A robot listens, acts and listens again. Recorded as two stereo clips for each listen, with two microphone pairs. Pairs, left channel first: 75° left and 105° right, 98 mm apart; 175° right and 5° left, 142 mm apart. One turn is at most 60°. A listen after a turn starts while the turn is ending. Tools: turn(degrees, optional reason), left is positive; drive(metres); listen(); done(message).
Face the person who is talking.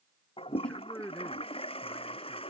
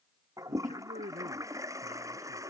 done("Found it: a man speaking, straight ahead.")